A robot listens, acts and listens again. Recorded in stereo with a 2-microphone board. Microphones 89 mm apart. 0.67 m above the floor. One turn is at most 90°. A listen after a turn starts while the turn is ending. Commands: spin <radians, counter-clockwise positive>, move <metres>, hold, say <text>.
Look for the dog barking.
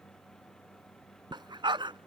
spin -1.13
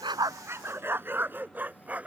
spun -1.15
spin -0.26
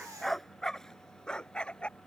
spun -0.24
spin 0.17
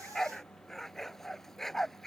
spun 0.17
say Found it: a dog barking, straight ahead.